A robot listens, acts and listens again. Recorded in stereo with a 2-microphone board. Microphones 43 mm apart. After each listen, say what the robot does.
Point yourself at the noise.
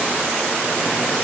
Keep listening.
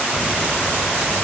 Turn 20° right.
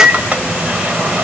Turn 140° right.
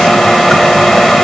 Found it: a microwave, straight ahead.